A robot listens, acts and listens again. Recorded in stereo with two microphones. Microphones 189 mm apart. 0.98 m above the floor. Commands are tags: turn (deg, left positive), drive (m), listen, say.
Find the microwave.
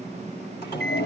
<turn deg="65"/>
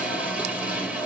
<listen/>
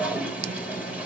<listen/>
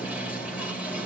<say>I heard a microwave, but can't make it out now. It was about straight ahead or 50° left.</say>